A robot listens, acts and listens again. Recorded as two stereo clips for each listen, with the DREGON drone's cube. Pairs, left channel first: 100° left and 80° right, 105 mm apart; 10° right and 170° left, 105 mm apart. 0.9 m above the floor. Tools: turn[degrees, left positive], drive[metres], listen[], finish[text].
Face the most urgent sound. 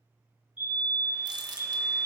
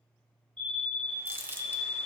Thought: The fire alarm: 65° left.
Action: turn[65]
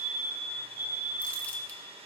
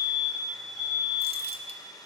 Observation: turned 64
Action: finish[Facing the fire alarm.]